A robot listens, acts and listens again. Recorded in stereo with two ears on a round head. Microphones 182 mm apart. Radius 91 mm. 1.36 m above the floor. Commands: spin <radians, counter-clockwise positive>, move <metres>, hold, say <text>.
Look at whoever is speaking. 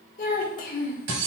spin 0.79
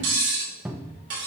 hold
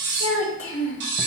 spin 1.48
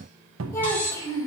spin 0.26
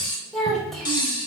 say Found it: a child speaking, straight ahead, 1 to 2 m away.